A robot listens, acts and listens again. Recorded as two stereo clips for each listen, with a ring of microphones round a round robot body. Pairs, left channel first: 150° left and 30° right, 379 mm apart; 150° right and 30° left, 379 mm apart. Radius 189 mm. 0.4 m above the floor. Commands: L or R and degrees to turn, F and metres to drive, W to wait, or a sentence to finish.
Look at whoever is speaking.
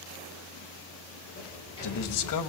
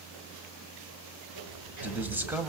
L115
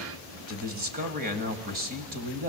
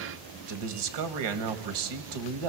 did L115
L35
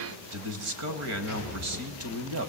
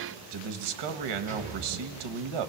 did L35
L20
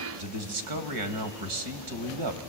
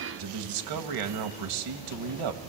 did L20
Facing the man speaking.